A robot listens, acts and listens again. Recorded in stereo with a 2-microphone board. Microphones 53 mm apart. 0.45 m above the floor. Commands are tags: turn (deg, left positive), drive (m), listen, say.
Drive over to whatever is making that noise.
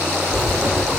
<turn deg="-90"/>
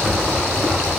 <drive m="1.0"/>
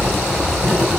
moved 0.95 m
<drive m="1.0"/>
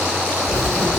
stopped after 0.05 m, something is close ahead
<say>I am next to the writing.</say>